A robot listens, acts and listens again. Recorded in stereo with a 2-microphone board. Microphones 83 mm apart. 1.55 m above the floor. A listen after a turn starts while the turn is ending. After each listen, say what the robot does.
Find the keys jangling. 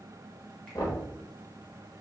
Keep listening.
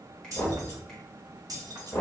Turn 50° right.
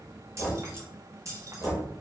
Turn 45° right.
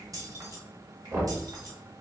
Turn 40° right.
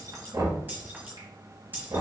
Turn 25° right.
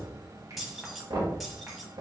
Found it: keys jangling, straight ahead.